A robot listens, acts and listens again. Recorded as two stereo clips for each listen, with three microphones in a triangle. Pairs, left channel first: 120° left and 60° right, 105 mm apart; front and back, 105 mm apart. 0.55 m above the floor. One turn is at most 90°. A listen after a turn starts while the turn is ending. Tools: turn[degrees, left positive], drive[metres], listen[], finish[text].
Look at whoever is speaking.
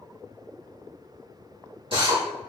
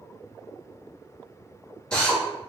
Action: listen[]
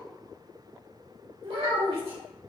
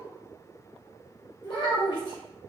Thought: The child speaking: 45° right.
Action: turn[-45]
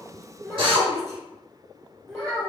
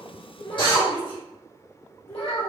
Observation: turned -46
Action: finish[Facing the child speaking.]